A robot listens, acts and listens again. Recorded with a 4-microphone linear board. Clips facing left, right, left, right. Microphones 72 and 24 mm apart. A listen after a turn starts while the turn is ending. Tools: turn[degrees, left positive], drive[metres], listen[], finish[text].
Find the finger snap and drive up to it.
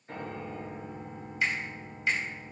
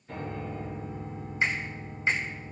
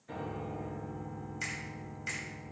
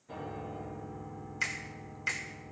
Thought: The finger snap: about 30° right or 150° right.
Action: turn[-30]
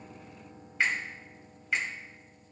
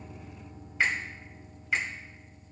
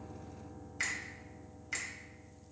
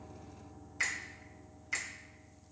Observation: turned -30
Action: drive[1.0]
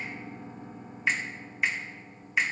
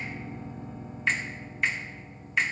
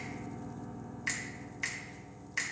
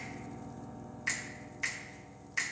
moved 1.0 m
Action: drive[1.0]
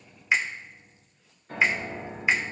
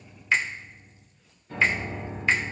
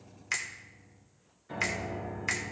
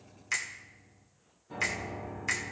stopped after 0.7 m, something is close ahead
Thought: The finger snap is now 15° left.
Action: turn[15]
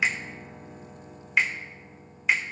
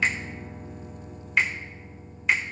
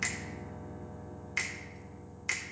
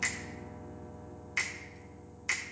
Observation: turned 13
Action: finish[Arrived at the finger snap, straight ahead.]